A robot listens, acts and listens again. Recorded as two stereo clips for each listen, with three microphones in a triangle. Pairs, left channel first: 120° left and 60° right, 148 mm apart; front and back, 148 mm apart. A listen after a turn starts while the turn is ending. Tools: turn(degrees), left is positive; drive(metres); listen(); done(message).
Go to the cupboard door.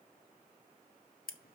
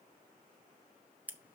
listen()
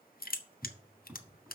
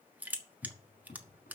turn(degrees=10)
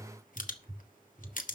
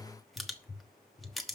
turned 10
drive(metres=1.0)
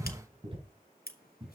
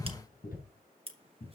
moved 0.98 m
turn(degrees=-10)
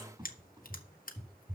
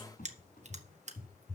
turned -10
drive(metres=1.0)
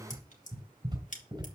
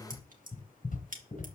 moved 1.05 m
drive(metres=1.0)
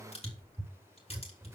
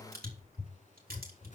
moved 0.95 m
turn(degrees=10)
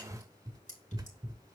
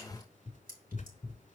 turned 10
drive(metres=1.0)
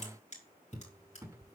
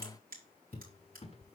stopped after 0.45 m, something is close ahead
done("Arrived at the cupboard door, straight ahead.")